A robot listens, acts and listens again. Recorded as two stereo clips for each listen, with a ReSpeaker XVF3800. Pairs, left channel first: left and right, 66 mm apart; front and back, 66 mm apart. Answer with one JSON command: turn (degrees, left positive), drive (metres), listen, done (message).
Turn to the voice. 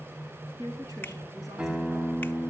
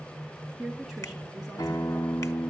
{"turn": -100}
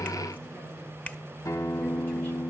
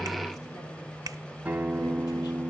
{"listen": true}
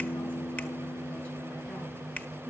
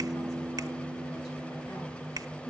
{"listen": true}
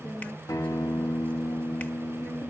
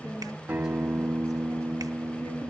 {"turn": 25}
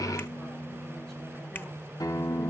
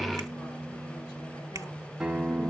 {"listen": true}
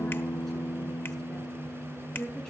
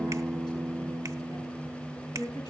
{"turn": 15}
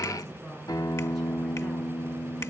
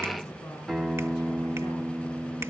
{"listen": true}
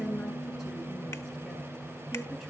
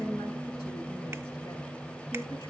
{"done": "Found it: a woman speaking, straight ahead."}